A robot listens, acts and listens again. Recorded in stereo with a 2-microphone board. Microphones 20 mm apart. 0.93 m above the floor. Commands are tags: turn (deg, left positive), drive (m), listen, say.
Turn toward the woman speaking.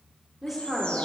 <turn deg="-30"/>
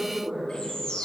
<turn deg="-150"/>
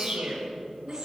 <turn deg="10"/>
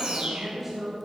<say>Found it: a woman speaking, straight ahead.</say>